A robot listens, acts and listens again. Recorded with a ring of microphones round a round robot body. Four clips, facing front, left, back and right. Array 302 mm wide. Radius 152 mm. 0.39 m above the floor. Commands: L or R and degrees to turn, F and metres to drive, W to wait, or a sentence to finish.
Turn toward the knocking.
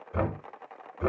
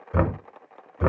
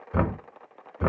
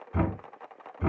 L115
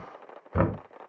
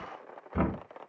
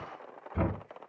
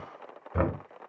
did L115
R20
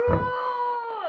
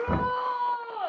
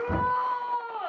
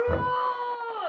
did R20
Found it: knocking, straight ahead.